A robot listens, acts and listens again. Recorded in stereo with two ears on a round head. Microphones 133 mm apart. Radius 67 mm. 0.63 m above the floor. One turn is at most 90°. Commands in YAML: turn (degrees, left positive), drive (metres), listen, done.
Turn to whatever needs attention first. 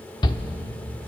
turn: 30
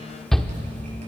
done: "Found it: a shout, straight ahead, 1 to 2 m away."